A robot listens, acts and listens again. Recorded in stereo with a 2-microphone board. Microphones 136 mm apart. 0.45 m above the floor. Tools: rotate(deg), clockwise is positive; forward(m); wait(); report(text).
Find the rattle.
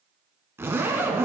wait()
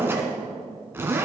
wait()
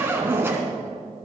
report("I can't make out a rattle to turn to.")